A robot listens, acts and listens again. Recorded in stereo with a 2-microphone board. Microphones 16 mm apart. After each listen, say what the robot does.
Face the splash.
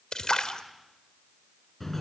Turn 50° left.
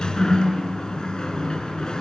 Keep listening.
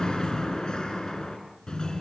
I heard a splash, but can't make it out now. It was about straight ahead or 80° left.